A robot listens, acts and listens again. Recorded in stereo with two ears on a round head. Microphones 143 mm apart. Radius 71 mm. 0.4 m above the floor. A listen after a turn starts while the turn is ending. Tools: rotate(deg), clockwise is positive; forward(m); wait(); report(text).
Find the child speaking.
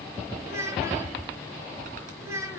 rotate(20)
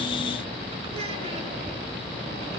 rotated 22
wait()
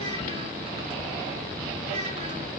wait()
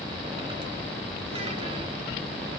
report("I heard a child speaking, but can't make it out now. It was about 5° left or 140° right.")